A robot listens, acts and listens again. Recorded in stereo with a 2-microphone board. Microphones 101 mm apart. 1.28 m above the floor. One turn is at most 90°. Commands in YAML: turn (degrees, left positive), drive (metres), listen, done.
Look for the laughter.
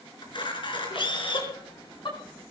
turn: 55
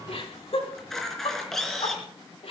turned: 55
turn: 80
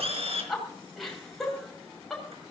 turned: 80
done: "Facing the laughter, over 4 m away."